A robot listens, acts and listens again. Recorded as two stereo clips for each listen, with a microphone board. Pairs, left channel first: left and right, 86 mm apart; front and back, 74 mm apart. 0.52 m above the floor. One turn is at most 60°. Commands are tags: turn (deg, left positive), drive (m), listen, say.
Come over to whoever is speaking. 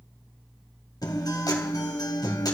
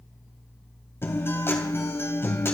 <listen/>
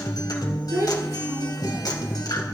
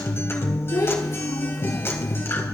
<turn deg="-35"/>
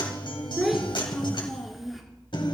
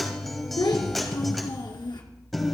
<drive m="1.0"/>
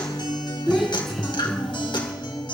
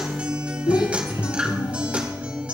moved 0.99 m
<drive m="1.0"/>
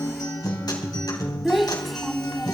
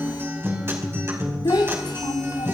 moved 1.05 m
<drive m="1.0"/>
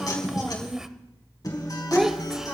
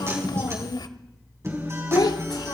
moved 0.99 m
<drive m="1.0"/>
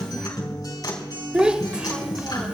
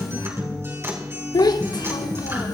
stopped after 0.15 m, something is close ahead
<turn deg="-10"/>
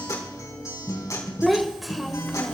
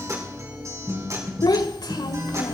<say>Arrived at the child speaking, straight ahead.</say>